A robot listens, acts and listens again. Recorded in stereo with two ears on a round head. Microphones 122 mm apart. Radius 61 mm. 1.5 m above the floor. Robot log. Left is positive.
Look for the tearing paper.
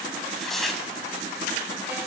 cmd yaw +30
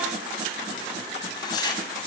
note: So it is at 150° left.
cmd yaw +150
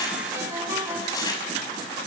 note: The tearing paper is now 30° left.
cmd yaw +30
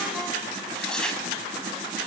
end: Facing the tearing paper, over 4 m away.